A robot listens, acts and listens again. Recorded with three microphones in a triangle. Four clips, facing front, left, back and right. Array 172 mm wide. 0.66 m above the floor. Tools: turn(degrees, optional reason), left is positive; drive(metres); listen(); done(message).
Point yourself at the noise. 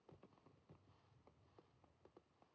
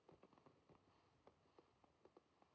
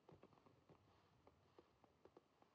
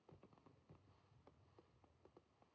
listen()
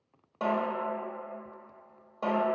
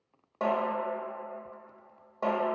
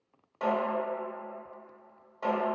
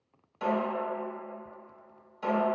turn(degrees=65, reason="The snare drum: 65° left.")
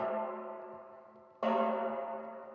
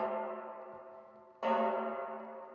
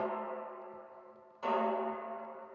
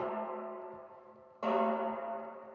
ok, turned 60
done("Found it: a snare drum, straight ahead.")